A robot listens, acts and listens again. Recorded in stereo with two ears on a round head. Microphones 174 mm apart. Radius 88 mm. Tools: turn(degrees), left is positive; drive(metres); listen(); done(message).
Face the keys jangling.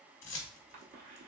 turn(degrees=75)
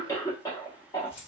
turn(degrees=30)
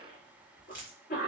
turn(degrees=-10)
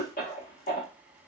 listen()
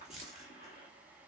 done("Facing the keys jangling, 1 to 2 m away.")